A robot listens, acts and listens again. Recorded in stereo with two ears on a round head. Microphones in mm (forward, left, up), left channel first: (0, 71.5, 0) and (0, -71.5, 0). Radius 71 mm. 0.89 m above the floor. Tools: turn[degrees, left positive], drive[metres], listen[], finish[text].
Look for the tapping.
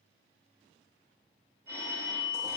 Action: listen[]
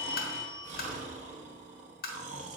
Thought: The tapping: about 60° left or 120° left.
Action: turn[60]
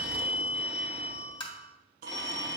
Thought: So it is at 35° left.
Action: turn[35]
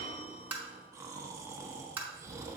Thought: The tapping is now 10° right.
Action: turn[-10]
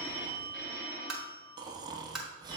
Action: finish[Facing the tapping, 1 to 2 m away.]